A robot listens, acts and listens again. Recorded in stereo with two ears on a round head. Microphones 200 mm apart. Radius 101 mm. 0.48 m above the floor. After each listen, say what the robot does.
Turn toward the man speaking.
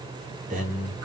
Turn 40° right.
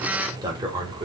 Turn 25° right.
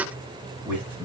Turn 10° right.
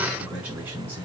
Turn 10° right.
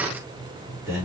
Turn 10° right.
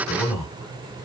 Facing the man speaking.